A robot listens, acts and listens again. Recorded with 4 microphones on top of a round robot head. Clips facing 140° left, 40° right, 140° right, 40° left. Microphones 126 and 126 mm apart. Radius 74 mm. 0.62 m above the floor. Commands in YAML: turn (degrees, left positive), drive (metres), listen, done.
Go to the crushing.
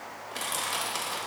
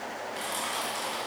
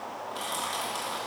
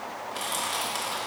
turn: 125
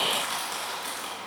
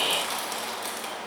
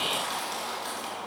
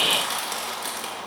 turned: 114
turn: 10
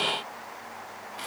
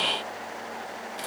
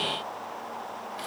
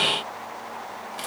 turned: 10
drive: 1.0
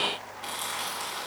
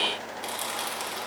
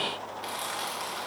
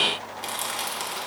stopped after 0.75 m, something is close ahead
done: "Blocked. The crushing is further on, straight ahead."